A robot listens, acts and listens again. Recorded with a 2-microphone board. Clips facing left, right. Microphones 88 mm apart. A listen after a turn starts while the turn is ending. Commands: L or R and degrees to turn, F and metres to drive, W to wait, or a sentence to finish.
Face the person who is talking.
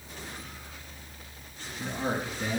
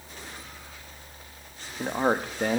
R55
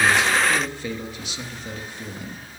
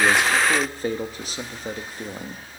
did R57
R50
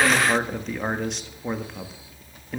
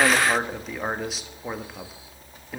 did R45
Found it: a man speaking, straight ahead, 1 to 2 m away.